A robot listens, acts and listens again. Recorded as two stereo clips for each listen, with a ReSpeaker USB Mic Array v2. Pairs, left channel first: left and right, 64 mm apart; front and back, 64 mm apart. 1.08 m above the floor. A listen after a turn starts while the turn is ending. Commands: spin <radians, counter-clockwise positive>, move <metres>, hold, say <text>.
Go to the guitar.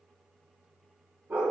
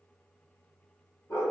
hold
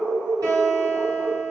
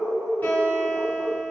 spin -1.13
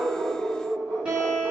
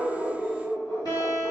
spin -0.26
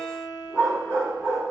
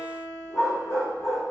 move 1.0
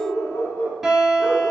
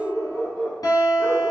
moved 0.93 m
move 1.0
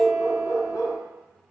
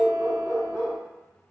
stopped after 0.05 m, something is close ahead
say Arrived at the guitar, straight ahead.